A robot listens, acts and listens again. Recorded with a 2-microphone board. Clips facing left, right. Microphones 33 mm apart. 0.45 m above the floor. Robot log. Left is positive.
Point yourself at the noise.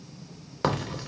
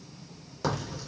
note: The crack: about 50° left or 130° left.
cmd yaw +50
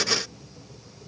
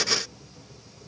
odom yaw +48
cmd idle
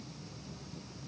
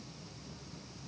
end: I heard a crack, but can't make it out now. It was about straight ahead or 85° left.